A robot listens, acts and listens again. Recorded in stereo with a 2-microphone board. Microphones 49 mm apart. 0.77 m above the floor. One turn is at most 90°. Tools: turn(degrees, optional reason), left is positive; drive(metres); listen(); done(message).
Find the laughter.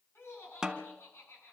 turn(degrees=55, reason="The laughter: about 55° left or 125° left.")
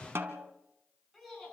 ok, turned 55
done("Facing the laughter.")